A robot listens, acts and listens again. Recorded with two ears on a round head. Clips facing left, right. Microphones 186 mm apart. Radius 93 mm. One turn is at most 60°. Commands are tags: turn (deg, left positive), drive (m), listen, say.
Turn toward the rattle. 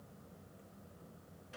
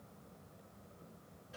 <listen/>
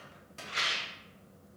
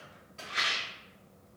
<turn deg="35"/>
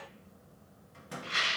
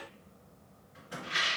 <turn deg="60"/>
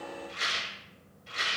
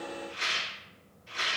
<turn deg="60"/>
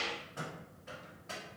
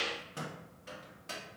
<say>Facing the rattle.</say>